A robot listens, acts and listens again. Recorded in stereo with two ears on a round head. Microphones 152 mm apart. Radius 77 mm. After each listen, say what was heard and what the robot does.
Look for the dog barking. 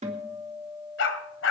Turn 90° left.
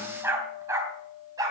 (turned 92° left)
So it is at 20° right. Turn 20° right.
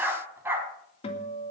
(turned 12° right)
The dog barking is now 15° right. Turn 15° right.
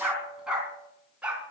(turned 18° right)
Facing the dog barking.